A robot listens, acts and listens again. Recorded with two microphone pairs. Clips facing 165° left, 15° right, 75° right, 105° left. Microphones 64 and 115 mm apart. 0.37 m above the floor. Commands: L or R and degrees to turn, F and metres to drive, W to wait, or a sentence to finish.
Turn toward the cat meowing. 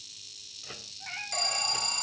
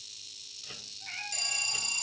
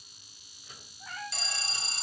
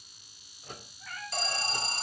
R140
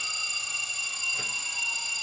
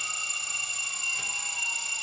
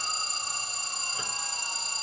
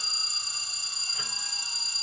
W
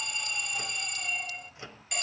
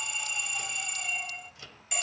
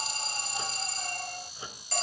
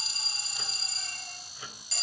W
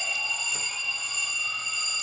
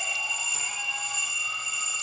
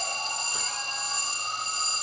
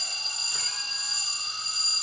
I heard a cat meowing from this way, but can't make it out now.